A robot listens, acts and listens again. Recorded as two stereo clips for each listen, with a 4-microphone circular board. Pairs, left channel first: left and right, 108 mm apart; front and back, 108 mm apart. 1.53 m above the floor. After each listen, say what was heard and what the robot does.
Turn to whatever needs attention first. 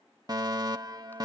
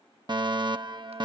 The fire alarm: 140° right. Turn 140° right.
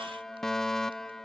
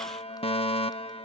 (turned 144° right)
Facing the fire alarm.